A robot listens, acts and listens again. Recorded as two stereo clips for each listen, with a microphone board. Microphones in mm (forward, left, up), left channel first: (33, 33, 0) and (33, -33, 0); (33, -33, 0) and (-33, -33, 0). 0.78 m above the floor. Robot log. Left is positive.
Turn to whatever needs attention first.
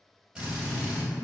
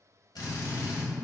cmd idle
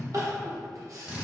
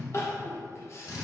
note: The crying: 50° right.
cmd yaw -50
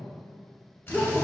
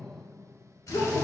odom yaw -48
end: Found it: crying, straight ahead.